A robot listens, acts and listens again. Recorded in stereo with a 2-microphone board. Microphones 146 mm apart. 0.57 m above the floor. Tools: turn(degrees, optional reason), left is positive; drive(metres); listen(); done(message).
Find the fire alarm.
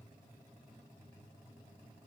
listen()
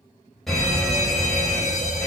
turn(degrees=30)
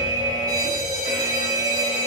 turn(degrees=-30, reason="So it is at 30° right.")
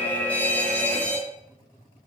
turn(degrees=10, reason="The fire alarm is now 10° left.")
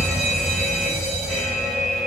done("Found it: a fire alarm, straight ahead.")